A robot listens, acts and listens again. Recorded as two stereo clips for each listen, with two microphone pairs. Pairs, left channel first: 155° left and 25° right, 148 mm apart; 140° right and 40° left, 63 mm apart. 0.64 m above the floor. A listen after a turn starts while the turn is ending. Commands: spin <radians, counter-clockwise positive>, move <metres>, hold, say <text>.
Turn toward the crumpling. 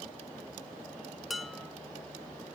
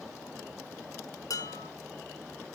hold
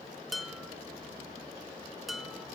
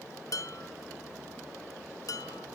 hold
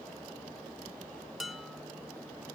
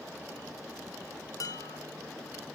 say I can't make out crumpling to turn to.